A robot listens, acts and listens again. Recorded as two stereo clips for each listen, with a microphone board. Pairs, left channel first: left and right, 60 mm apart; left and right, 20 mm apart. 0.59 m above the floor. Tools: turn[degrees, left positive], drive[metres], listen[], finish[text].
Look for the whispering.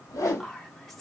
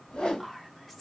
Action: turn[30]
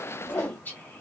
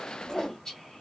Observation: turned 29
Thought: So it is at 145° left.
Action: turn[145]
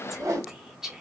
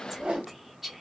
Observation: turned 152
Action: finish[Found it: whispering, straight ahead, 1 to 2 m away.]